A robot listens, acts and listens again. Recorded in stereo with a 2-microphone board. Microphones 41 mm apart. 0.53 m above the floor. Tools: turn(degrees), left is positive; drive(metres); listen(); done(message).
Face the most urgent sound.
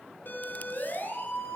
turn(degrees=50)
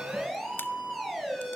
done("Found it: a siren, straight ahead, over 4 m away.")